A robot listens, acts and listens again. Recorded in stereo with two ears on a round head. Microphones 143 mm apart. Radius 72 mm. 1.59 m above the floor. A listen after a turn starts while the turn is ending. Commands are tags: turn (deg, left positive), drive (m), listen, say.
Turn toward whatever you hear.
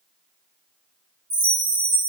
<turn deg="-70"/>
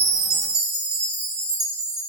<turn deg="-40"/>
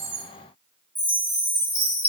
<turn deg="-10"/>
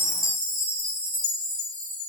<say>Facing the chime.</say>